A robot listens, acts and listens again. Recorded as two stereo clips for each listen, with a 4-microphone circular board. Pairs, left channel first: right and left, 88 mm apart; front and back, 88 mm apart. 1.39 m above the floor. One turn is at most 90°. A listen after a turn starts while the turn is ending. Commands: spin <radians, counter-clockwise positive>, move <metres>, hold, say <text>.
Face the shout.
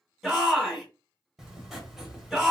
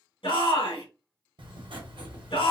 say Facing the shout, 1 to 2 m away.